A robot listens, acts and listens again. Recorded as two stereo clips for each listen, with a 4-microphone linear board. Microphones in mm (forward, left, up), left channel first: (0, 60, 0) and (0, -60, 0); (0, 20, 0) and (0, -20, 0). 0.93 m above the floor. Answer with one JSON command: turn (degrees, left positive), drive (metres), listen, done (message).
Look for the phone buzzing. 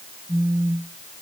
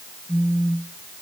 {"turn": -20}
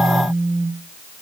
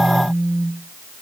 {"turn": -140}
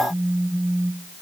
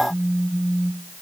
{"done": "Facing the phone buzzing, over 4 m away."}